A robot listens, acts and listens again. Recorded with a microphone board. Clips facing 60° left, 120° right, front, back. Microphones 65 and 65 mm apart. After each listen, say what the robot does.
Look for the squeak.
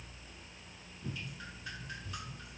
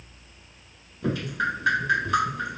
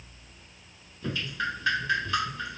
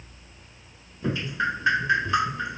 Keep listening.
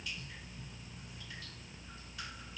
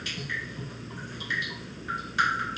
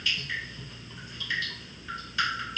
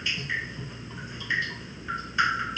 Keep listening.
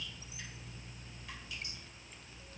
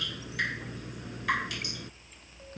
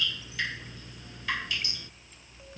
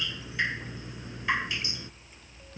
I can't make out a squeak, only dripping.